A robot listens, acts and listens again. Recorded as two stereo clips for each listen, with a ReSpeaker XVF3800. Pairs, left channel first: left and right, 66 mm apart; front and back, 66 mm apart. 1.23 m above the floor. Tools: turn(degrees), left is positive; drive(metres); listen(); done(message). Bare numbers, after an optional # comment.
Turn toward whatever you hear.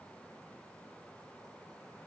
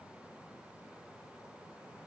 listen()
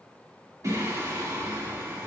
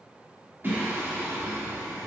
# The singing: 130° right.
turn(-130)
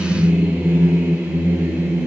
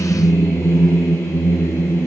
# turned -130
# The singing is now 45° right.
turn(-45)
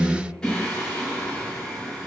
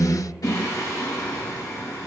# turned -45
# The singing is now 15° left.
turn(15)
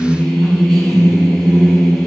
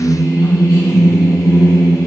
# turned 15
done("Facing the singing.")